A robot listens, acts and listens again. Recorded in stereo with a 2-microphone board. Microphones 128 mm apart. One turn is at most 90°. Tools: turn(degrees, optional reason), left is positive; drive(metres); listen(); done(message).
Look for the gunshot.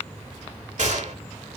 turn(degrees=-70, reason="The gunshot: about 70° right or 110° right.")
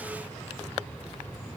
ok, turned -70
listen()
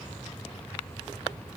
done("I heard a gunshot, but can't make it out now. It was about straight ahead or 40° right.")